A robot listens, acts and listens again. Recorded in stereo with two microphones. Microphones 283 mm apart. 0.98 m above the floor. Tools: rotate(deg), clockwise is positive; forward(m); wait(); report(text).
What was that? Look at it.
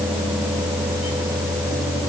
wait()
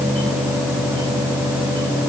wait()
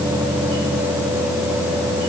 report("I can't make out anything.")